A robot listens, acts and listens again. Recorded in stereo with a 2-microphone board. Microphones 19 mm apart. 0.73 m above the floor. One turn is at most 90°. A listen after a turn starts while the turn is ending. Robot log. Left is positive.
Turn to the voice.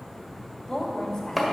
note: The woman speaking: about 30° left or 150° left.
cmd yaw +30
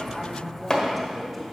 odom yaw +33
end: Found it: a woman speaking, straight ahead, 2 to 4 m away.